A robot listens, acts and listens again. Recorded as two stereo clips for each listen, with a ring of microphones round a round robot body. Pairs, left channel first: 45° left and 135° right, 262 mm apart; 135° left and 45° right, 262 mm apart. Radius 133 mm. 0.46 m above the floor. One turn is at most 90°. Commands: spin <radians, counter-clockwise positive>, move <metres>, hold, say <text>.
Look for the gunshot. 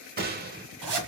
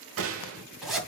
spin -1.40
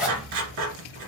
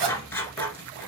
say Facing where the gunshot came from. I can't hear it now.